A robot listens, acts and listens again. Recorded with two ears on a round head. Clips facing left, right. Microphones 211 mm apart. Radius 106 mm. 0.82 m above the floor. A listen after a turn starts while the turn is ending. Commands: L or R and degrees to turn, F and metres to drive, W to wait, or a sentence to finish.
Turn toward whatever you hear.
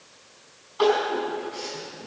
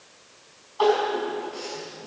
L25
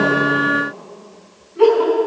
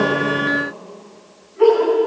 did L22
L130
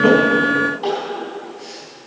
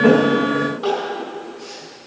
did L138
Facing the crying, over 4 m away.